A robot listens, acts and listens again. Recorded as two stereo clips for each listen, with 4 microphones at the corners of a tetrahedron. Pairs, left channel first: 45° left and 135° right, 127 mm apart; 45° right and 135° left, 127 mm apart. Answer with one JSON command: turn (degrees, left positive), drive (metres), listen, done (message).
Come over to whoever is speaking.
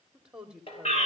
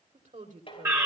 {"turn": 140}
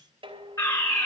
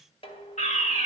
{"listen": true}
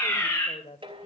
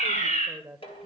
{"turn": 50}
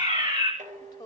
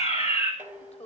{"turn": -10}
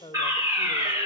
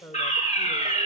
{"drive": 1.0}
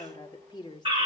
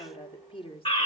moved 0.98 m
{"drive": 1.0}
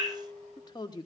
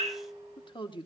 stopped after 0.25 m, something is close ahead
{"done": "I am next to the woman speaking."}